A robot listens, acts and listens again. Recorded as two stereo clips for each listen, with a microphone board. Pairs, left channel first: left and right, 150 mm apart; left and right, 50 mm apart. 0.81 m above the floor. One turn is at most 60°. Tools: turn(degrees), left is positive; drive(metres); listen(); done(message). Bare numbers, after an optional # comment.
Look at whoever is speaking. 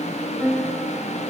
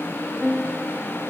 listen()
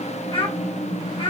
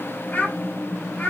# The child speaking: about 35° left or 145° left.
turn(35)
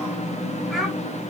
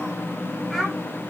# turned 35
done("Facing the child speaking, 2 to 4 m away.")